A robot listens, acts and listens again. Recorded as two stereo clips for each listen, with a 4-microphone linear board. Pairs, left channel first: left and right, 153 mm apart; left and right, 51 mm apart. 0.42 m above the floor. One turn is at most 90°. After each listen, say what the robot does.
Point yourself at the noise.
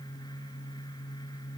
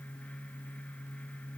Keep listening.
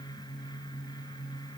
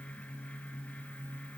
Keep listening.
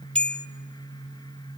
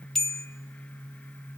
Turn 30° left.
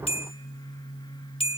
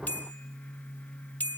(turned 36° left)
Turn 90° left.
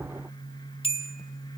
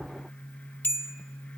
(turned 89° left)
Turn 45° left.
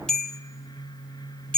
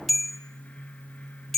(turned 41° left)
Facing the bell.